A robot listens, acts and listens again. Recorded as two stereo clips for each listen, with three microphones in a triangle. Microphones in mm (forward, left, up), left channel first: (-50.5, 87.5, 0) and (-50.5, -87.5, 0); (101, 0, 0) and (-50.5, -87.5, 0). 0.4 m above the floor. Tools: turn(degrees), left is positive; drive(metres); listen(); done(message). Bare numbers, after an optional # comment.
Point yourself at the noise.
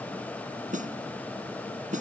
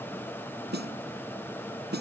# The snare drum: 135° right.
turn(-135)
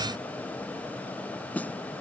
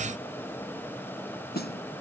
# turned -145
# The snare drum is now 10° left.
turn(10)
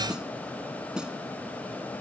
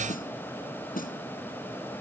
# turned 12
done("Facing the snare drum.")